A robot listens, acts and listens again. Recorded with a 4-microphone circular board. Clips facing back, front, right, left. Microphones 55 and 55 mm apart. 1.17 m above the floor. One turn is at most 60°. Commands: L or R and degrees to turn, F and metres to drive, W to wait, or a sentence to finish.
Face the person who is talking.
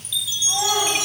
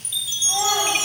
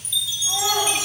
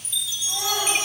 R15
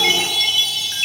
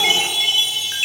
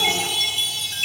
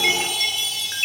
W
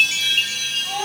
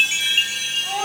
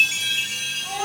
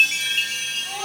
Facing the child speaking, over 4 m away.